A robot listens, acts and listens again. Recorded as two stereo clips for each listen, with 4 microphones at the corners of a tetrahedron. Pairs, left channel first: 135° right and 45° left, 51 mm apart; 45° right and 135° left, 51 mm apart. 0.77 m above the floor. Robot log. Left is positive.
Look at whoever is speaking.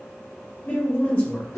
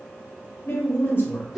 note: The woman speaking: 85° right.
cmd yaw -85
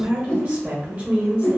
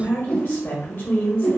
note: The woman speaking is now 15° right.
cmd yaw -15
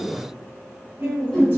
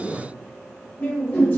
end: Found it: a woman speaking, straight ahead.